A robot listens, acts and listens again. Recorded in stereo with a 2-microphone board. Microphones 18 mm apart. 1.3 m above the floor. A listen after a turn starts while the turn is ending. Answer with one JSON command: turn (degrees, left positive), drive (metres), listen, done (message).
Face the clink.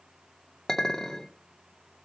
{"turn": 25}
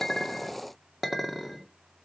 {"done": "Found it: a clink, straight ahead, 2 to 4 m away."}